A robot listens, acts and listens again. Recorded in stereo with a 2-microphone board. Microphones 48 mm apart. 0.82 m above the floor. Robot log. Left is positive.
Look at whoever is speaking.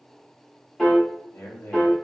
note: The man speaking: about 60° left or 120° left.
cmd yaw +60
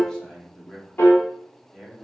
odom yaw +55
note: So it is at 10° left.
cmd yaw +10
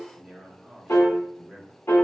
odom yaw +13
end: Found it: a man speaking, straight ahead, 1 to 2 m away.